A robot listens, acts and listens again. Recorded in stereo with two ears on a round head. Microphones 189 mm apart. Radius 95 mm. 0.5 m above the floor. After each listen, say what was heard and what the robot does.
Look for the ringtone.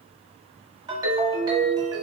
The ringtone: about 20° right or 160° right. Turn 20° right.
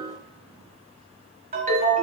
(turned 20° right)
So it is at 135° right. Turn 135° right.
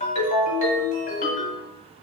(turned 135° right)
The ringtone is now 35° left. Turn 35° left.
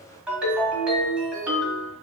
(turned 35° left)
Found it: a ringtone, straight ahead.